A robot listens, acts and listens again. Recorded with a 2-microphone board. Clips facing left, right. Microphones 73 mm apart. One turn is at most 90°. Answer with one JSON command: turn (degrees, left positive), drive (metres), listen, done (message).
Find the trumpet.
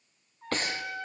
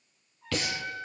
{"turn": 55}
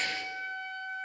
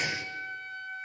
{"turn": 75}
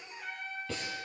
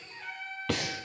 {"done": "Found it: a trumpet, straight ahead, over 4 m away."}